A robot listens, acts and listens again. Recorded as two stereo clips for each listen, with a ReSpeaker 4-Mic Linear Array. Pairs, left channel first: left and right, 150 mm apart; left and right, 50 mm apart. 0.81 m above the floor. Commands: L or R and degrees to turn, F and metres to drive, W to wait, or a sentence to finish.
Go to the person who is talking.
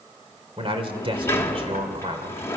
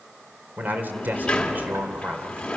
R35
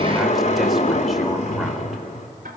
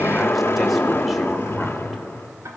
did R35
W
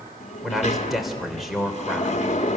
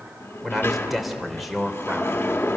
F1.0
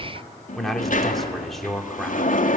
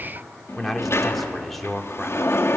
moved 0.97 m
F1.0
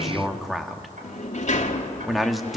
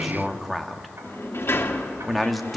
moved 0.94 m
F1.0
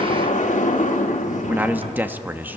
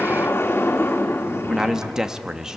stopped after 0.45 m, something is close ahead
R15
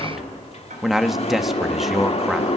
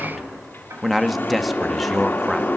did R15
Arrived at the man speaking, straight ahead.